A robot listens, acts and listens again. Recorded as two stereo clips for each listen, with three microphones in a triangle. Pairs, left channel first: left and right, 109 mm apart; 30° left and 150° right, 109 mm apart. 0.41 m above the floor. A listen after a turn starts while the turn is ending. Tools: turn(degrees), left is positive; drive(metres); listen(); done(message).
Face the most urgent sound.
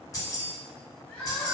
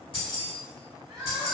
turn(degrees=160)
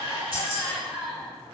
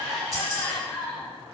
done("Found it: crying, straight ahead.")